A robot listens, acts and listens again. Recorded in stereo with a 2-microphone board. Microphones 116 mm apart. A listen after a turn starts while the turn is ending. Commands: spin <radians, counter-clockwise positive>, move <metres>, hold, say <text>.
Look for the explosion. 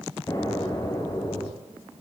spin 0.61
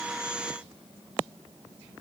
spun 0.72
hold
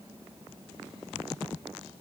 say I heard an explosion, but can't make it out now. It was about 10° right or 105° left.